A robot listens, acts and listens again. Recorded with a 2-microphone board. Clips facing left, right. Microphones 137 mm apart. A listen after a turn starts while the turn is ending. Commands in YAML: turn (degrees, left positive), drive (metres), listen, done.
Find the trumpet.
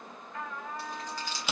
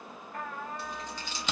turn: -55
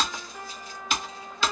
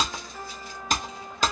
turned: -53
done: "Facing the trumpet, 1 to 2 m away."